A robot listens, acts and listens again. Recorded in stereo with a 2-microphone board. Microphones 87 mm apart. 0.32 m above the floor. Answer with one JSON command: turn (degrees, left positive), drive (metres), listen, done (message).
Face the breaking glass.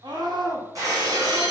{"turn": -45}
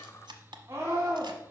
{"listen": true}
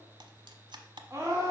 {"done": "I heard breaking glass, but can't make it out now. It was about straight ahead or 90° right."}